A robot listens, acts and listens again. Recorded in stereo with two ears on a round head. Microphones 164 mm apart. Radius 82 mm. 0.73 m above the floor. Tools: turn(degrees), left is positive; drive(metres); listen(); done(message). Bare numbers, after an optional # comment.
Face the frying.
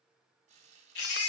# The frying: about 40° right or 140° right.
turn(-40)
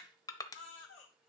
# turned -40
listen()
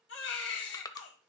listen()
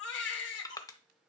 done("I heard frying, but can't make it out now. It was about straight ahead or 100° right.")